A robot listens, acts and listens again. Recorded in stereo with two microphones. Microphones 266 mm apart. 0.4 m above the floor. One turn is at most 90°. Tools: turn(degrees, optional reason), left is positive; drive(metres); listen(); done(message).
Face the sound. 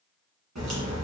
turn(degrees=-90)
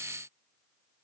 done("I heard a crack from this way, but can't make it out now.")